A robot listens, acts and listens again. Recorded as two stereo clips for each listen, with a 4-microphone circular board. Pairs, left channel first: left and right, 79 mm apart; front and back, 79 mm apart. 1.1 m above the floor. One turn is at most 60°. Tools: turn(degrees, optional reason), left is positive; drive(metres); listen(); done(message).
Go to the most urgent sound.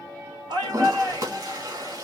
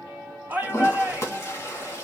turn(degrees=-60, reason="The shout: 110° right.")
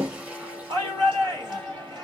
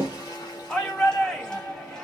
turn(degrees=-60, reason="The shout is now 80° right.")
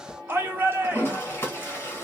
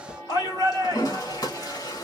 turn(degrees=-30, reason="The shout is now 30° right.")
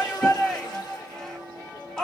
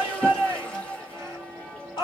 turn(degrees=10, reason="The shout is now 10° left.")
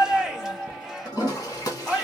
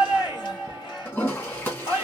drive(metres=1.0)
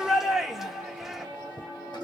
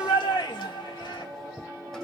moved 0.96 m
drive(metres=1.0)
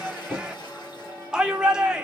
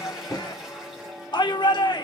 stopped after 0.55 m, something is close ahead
turn(degrees=-10, reason="The shout is now 10° right.")
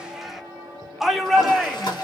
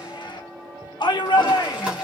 done("Arrived at the shout, straight ahead.")